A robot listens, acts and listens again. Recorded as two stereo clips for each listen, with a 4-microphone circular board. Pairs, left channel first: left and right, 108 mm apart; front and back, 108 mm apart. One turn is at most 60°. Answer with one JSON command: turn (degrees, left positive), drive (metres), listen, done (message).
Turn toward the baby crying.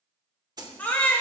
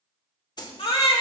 {"turn": 15}
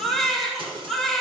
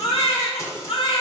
{"done": "Facing the baby crying."}